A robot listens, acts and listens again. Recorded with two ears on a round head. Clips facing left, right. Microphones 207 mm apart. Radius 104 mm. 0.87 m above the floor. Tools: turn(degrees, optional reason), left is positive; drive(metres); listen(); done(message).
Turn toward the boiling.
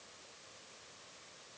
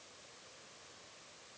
listen()
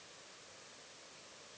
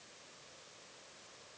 listen()
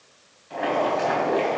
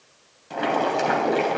turn(degrees=-60, reason="The boiling: about 60° right or 120° right.")
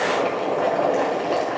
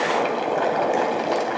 turn(degrees=-60, reason="So it is at 60° right.")
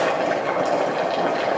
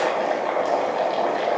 turn(degrees=10, reason="The boiling is now 10° left.")
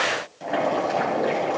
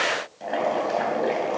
done("Found it: boiling, straight ahead, 2 to 4 m away.")